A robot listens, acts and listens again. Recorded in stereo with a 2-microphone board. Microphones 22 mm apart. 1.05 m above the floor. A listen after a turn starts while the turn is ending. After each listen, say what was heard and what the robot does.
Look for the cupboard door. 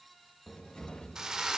The cupboard door: about 55° left or 125° left. Turn 55° left.
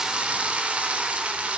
Keep listening.
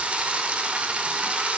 Keep listening.
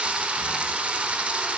I heard a cupboard door, but can't make it out now. It was about straight ahead or 70° left.